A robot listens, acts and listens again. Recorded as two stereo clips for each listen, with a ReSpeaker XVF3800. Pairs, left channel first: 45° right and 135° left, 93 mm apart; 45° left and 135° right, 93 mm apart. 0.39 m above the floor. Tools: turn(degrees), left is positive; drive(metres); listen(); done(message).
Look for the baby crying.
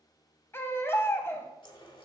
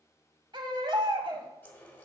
turn(degrees=-110)
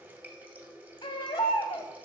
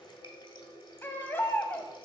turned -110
turn(degrees=-20)
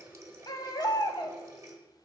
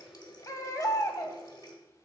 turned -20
done("Facing the baby crying, under 1 m away.")